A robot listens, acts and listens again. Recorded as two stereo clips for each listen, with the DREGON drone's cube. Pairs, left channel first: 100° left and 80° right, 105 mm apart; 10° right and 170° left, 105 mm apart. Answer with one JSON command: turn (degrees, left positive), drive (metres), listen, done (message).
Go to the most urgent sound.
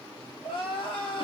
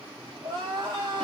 {"turn": 130}
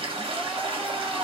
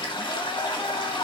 {"listen": true}
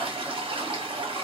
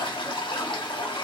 {"listen": true}
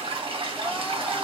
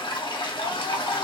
{"done": "I heard crying from this way, but can't make it out now. I did not reach it."}